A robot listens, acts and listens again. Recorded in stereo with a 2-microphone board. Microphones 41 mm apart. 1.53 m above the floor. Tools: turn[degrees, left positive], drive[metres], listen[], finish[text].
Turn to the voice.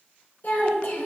Thought: The child speaking: about 50° left or 130° left.
Action: turn[50]
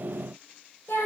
Thought: So it is at 80° left.
Action: turn[80]
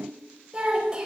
Thought: The child speaking is now 20° right.
Action: turn[-20]
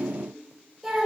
Action: finish[Facing the child speaking, over 4 m away.]